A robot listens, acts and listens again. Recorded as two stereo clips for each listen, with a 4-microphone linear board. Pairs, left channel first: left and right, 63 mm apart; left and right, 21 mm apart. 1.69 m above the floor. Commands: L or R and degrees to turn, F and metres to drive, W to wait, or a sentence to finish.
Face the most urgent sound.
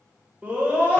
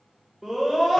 R25
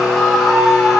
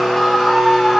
Found it: a scream, straight ahead.